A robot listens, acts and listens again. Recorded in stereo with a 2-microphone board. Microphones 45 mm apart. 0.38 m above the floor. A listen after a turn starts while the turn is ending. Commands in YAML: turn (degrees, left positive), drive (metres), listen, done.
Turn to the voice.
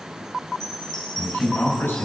turn: 65
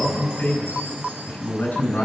turn: 50
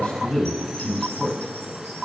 turn: 15
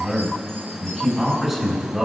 done: "Found it: a man speaking, straight ahead, 2 to 4 m away."